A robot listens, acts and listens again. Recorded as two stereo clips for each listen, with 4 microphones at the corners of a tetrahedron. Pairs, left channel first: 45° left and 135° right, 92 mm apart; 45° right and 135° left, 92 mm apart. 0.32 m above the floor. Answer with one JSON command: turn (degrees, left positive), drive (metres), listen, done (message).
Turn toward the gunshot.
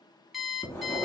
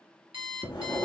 {"listen": true}
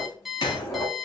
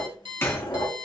{"turn": 15}
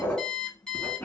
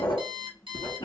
{"done": "I heard a gunshot from this way, but can't make it out now."}